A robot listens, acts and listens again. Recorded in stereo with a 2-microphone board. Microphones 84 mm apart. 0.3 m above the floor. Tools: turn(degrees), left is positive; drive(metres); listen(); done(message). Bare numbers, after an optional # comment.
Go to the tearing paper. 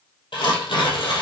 turn(90)
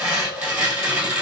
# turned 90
# So it is at 10° right.
turn(-10)
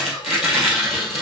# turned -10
drive(1.0)
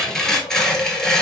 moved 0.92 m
drive(1.0)
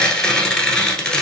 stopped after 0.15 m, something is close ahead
# The tearing paper is now 10° left.
turn(10)
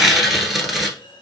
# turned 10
done("Arrived at the tearing paper, straight ahead.")